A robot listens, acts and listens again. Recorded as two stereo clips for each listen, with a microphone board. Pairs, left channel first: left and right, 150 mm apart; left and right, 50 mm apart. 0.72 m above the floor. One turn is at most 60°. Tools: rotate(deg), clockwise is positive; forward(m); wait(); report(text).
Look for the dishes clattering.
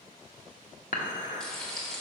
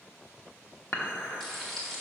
rotate(-60)
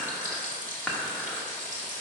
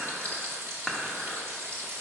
report("Facing the dishes clattering.")